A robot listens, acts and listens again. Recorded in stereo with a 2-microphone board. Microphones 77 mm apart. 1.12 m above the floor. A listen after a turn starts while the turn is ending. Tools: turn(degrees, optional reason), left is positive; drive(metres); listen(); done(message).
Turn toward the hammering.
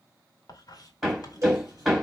turn(degrees=-30)
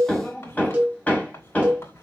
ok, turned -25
turn(degrees=20, reason="So it is at 20° left.")
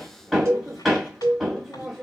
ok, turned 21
done("Found it: hammering, straight ahead.")